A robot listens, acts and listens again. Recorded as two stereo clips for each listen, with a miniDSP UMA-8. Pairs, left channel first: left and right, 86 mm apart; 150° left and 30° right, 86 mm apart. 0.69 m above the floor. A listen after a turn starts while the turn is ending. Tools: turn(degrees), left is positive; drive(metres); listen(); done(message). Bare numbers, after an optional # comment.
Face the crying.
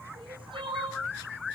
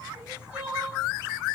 # The crying: 110° right.
turn(-110)
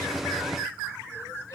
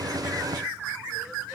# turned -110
listen()
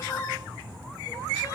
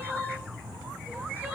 # The crying is now 30° left.
turn(30)
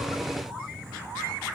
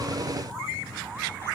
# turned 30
listen()
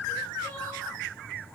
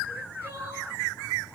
# The crying is now 10° left.
turn(10)
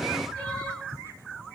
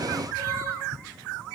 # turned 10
listen()
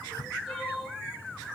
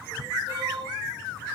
done("Facing the crying.")